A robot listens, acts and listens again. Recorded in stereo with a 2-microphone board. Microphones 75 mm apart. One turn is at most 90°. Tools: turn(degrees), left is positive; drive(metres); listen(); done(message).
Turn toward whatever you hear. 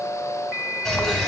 turn(degrees=30)
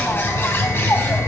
turn(degrees=90)
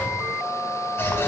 turn(degrees=35)
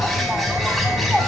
done("Found it: a bird, straight ahead, 2 to 4 m away.")